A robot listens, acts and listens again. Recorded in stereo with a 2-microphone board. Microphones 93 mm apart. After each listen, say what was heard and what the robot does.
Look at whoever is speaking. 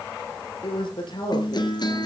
The man speaking: about 60° left or 120° left. Turn 60° left.
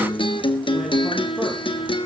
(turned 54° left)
Keep listening.
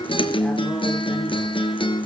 Keep listening.
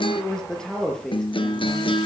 Facing the man speaking, over 4 m away.